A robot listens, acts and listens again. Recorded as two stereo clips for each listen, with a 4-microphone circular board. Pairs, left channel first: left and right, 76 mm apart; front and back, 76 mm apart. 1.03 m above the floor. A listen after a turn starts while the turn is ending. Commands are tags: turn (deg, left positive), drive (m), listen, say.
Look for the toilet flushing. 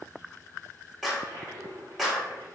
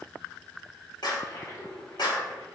<turn deg="-45"/>
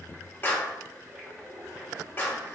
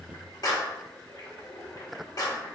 <turn deg="-15"/>
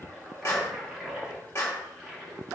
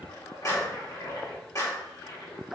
<say>Found it: a toilet flushing, straight ahead.</say>